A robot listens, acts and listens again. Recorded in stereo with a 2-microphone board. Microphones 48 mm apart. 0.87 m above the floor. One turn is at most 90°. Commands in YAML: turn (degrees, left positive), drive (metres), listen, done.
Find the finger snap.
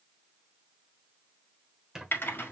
listen: true
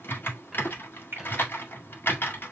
turn: -45
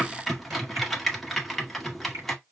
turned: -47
turn: -85
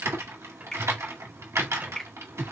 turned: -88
done: "Found it: a finger snap, straight ahead."